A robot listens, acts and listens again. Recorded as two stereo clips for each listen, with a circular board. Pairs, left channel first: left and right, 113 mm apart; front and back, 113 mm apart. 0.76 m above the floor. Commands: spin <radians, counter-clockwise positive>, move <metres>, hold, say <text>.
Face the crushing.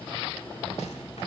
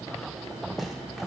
hold
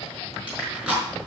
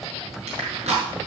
spin -2.97
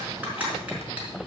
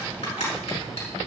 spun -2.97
spin -0.26
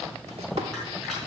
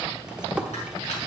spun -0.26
hold
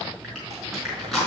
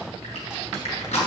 say Found it: crushing, straight ahead, over 4 m away.